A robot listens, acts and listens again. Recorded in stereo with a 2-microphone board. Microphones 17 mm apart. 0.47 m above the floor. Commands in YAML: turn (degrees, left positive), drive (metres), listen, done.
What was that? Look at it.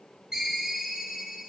turn: -35
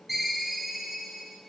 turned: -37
done: "Facing the ringtone, 1 to 2 m away."